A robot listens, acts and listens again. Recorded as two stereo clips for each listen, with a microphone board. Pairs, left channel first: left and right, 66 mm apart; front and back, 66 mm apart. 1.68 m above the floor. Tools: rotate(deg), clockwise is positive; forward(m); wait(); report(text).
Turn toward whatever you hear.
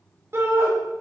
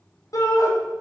rotate(35)
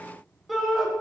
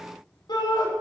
report("Facing the shout, 2 to 4 m away.")